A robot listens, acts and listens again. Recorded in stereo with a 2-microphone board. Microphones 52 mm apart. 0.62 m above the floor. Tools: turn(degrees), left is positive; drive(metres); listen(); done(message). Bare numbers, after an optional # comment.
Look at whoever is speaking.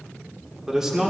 turn(-30)
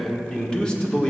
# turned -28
# So it is at 20° left.
turn(20)
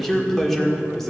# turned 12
done("Found it: a man speaking, straight ahead, 1 to 2 m away.")